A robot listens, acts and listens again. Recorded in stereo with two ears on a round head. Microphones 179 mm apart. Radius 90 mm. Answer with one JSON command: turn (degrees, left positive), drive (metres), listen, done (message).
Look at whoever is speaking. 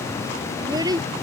{"turn": -20}
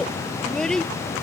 {"done": "Facing the child speaking."}